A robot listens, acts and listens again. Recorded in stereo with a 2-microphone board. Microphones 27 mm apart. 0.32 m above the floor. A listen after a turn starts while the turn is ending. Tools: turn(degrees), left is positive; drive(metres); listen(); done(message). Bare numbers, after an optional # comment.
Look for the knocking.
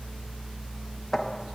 turn(30)
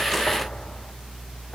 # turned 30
listen()
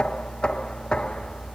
# So it is at 145° left.
turn(145)
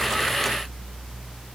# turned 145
listen()
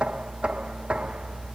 # The knocking is now 45° right.
turn(-45)
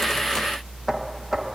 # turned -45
# The knocking is now 15° right.
turn(-15)
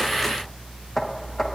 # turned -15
# The knocking is now 10° left.
turn(10)
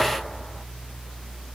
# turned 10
listen()
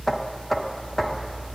done("Facing the knocking.")